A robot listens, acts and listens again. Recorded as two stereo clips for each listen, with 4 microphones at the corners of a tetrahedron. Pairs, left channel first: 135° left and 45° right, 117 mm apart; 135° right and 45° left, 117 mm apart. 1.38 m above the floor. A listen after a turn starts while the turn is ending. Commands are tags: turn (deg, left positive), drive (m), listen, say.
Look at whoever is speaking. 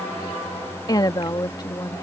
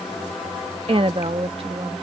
<turn deg="80"/>
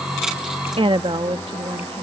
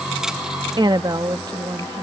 <say>Facing the woman speaking.</say>